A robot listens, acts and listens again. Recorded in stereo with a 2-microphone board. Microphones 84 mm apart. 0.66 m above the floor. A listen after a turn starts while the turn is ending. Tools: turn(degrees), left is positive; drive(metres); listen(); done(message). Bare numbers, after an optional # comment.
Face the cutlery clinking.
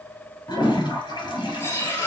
# The cutlery clinking: about 30° left or 150° left.
turn(30)
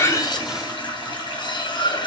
# So it is at 115° left.
turn(115)
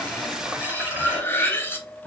# The cutlery clinking is now 25° left.
turn(25)
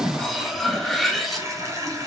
done("Found it: cutlery clinking, straight ahead, under 1 m away.")